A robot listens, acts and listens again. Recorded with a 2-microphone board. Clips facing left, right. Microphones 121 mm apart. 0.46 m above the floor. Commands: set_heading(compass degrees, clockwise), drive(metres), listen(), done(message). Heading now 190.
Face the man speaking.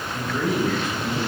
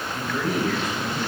set_heading(160)
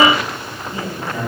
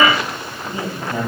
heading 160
set_heading(190)
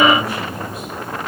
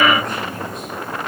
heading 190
done("Found it: a man speaking, straight ahead, 2 to 4 m away.")